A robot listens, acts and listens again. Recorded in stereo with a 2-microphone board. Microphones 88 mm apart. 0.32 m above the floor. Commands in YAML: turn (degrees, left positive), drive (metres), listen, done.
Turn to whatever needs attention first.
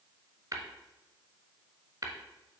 listen: true
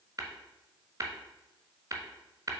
listen: true
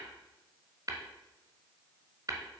done: "I can't make out anything urgent, only tapping."